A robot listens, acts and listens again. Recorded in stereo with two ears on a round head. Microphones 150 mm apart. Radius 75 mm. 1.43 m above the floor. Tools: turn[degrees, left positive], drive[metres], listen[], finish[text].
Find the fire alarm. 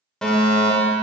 Action: turn[30]
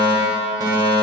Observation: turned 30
Thought: So it is at 25° right.
Action: turn[-25]
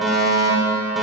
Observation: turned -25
Action: finish[Found it: a fire alarm, straight ahead.]